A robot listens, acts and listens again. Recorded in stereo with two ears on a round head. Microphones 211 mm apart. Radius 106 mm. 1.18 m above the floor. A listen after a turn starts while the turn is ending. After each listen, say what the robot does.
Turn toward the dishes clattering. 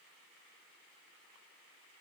Keep listening.
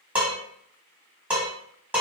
Turn 30° right.
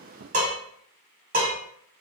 Turn 145° right.
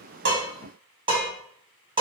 Turn 20° right.
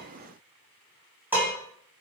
Turn 10° right.
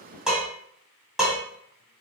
Found it: dishes clattering, straight ahead, 1 to 2 m away.